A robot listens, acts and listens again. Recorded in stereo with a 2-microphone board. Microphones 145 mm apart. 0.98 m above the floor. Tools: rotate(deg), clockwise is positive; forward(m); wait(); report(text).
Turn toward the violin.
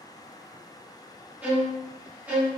rotate(30)
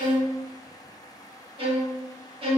rotate(140)
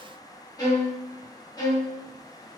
rotate(-25)
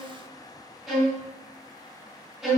report("Found it: a violin, straight ahead.")